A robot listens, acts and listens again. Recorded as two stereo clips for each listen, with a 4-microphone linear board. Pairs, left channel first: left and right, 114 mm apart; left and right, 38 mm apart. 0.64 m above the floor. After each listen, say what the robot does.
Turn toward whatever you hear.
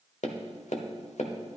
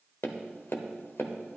Turn 90° left.
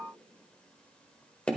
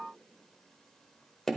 Turn 10° left.
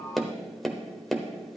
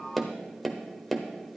Found it: tapping, straight ahead.